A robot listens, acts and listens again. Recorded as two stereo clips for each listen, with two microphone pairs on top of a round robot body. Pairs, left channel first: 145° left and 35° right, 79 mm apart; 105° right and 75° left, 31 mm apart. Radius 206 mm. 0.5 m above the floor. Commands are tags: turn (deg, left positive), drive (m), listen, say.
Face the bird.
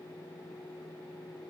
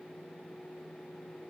<listen/>
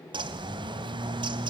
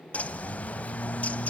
<turn deg="-55"/>
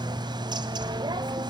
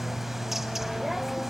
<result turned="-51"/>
<say>Facing the bird.</say>